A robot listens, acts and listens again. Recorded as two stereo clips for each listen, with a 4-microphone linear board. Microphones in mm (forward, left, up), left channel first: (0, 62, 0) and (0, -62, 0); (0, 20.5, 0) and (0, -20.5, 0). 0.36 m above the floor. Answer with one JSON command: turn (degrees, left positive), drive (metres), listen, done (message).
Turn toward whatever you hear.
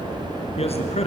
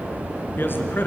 {"turn": 60}
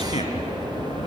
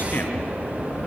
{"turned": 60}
{"listen": true}
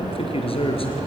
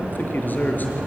{"turn": 50}
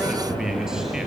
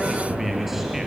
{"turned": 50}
{"done": "Found it: a man speaking, straight ahead, over 4 m away."}